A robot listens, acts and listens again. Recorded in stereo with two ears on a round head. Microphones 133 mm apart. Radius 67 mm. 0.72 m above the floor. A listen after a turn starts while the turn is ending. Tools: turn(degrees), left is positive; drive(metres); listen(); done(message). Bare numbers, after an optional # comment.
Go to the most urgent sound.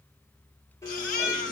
# The baby crying: about 65° left or 115° left.
turn(65)
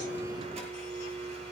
listen()
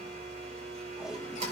listen()
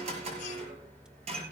done("I heard a baby crying, but can't make it out now. It was about straight ahead or 50° left. I did not reach it.")